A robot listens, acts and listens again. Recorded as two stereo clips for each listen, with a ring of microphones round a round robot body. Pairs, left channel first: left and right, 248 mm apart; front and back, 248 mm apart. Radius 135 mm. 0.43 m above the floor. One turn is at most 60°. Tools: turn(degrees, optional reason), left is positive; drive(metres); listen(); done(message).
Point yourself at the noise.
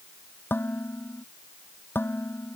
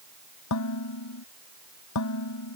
turn(degrees=10, reason="The dishes clattering: 10° left.")
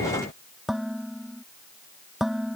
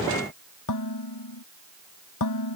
done("Found it: dishes clattering, straight ahead.")